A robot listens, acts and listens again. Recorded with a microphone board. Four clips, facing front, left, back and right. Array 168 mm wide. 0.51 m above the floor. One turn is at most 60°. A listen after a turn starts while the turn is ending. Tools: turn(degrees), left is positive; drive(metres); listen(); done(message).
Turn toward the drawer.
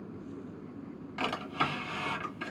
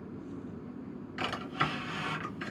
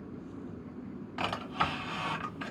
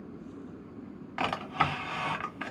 turn(degrees=-60)
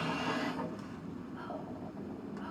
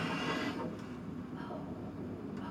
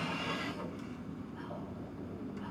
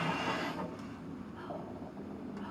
turn(degrees=-40)
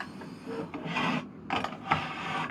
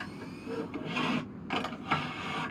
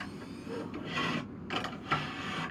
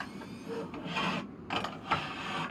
done("Facing the drawer.")